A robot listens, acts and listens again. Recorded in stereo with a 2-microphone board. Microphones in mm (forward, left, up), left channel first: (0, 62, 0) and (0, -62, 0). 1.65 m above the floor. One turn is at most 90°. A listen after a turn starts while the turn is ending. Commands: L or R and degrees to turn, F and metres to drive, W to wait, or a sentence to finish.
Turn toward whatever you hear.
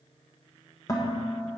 L30
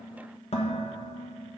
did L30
L90
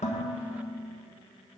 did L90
L30
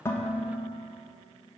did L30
R15
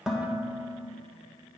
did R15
Facing the dishes clattering, 1 to 2 m away.